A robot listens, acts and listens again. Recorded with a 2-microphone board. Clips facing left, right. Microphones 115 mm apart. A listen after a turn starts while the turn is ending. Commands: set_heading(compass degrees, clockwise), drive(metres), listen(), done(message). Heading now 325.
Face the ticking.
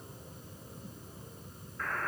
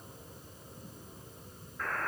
listen()
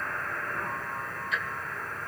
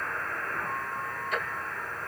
set_heading(20)
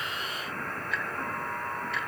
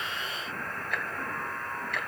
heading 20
set_heading(90)
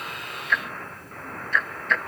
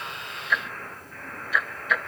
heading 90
set_heading(100)
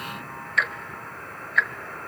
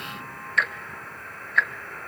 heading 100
done("Found it: ticking, straight ahead.")